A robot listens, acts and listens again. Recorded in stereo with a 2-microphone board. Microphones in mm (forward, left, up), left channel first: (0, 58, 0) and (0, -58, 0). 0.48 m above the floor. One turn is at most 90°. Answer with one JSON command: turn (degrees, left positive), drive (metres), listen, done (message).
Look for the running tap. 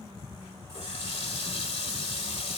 {"turn": 65}
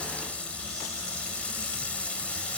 {"turn": 10}
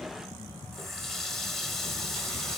{"done": "Facing the running tap, 1 to 2 m away."}